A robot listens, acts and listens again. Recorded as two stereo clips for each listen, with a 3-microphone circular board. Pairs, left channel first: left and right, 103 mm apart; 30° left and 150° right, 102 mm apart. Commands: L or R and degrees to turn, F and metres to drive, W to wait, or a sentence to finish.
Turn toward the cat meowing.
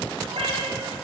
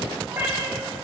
R80
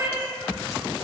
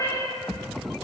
R20
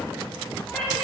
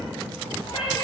L10
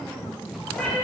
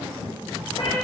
L10
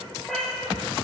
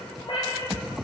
Found it: a cat meowing, straight ahead.